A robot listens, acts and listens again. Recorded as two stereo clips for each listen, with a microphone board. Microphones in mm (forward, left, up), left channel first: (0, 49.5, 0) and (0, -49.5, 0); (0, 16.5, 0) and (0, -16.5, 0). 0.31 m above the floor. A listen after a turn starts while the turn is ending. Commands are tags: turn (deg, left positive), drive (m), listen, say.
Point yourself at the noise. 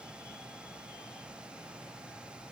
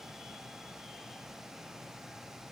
<listen/>
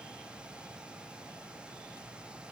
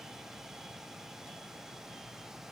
<listen/>
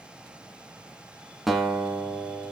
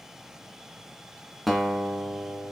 <turn deg="30"/>
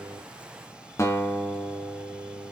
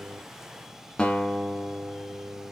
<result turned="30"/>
<turn deg="150"/>
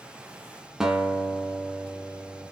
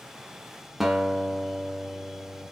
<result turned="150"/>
<say>Facing the guitar, 1 to 2 m away.</say>